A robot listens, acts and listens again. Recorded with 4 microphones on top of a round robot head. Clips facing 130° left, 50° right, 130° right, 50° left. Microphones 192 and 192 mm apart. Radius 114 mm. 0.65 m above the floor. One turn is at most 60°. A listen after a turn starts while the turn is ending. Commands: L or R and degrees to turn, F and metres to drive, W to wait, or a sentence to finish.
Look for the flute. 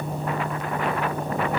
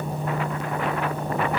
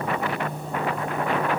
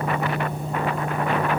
W
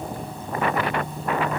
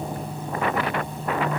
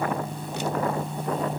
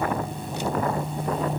W
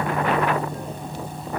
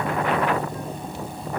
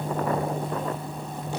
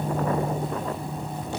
I can't make out a flute.